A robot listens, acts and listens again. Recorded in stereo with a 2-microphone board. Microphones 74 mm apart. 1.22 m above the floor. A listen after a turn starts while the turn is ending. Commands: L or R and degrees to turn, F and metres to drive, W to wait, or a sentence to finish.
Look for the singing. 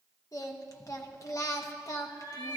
L45
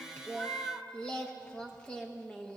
L10
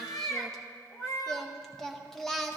Facing the singing.